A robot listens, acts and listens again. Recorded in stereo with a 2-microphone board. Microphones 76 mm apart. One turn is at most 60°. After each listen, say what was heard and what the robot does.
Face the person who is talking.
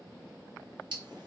Keep listening.
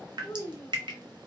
The child speaking: about 45° left or 135° left. Turn 45° left.
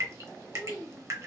Found it: a child speaking, straight ahead, under 1 m away.